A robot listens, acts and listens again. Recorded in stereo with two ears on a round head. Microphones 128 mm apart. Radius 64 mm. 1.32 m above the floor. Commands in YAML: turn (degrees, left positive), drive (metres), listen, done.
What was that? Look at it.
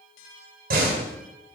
turn: -70
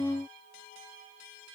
listen: true
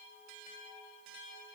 done: "I heard a door slam, but can't make it out now. It was about straight ahead or 40° right."